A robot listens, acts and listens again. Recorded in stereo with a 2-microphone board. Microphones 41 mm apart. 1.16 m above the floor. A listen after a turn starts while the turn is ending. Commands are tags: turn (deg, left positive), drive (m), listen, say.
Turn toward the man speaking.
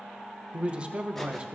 <turn deg="-30"/>
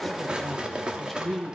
<say>Facing the man speaking, 1 to 2 m away.</say>